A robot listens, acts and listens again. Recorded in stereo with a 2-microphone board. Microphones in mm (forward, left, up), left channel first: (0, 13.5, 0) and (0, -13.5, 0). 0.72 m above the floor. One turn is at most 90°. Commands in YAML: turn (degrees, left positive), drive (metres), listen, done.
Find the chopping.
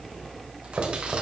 turn: -70
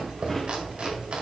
turn: -40
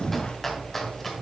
turn: 15
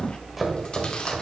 done: "Found it: chopping, straight ahead."